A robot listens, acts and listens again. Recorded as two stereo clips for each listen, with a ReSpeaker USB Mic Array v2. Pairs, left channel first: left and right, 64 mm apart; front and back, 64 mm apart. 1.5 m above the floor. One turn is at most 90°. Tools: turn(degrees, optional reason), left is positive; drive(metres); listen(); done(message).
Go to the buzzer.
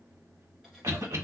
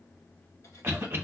listen()
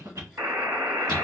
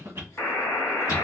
turn(degrees=-50, reason="The buzzer: 50° right.")
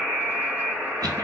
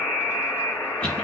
drive(metres=1.0)
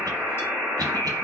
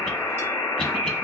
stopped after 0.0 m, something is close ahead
done("Something is in my way. I am facing the buzzer but have not reached it.")